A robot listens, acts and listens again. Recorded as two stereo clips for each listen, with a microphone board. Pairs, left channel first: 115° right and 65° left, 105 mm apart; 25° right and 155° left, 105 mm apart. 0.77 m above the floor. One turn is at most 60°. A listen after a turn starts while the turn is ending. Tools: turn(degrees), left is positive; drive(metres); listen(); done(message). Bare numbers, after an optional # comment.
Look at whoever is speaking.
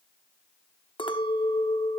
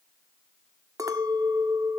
listen()
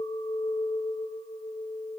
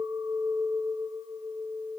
listen()
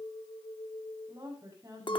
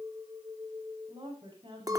# The woman speaking: 125° left.
turn(60)
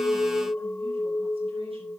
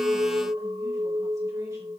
# Nothing new. It was at 65° left.
turn(60)
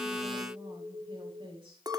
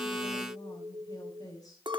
# The woman speaking is now 30° left.
turn(30)
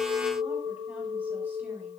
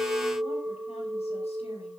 listen()
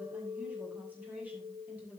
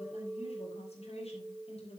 done("Found it: a woman speaking, straight ahead.")